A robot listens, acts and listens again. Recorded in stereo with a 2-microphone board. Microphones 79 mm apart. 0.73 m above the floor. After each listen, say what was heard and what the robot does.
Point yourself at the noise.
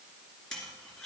Turn 30° left.
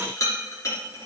So it is at 140° left. Turn 140° left.
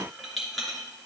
Found it: a rattle, straight ahead, 2 to 4 m away.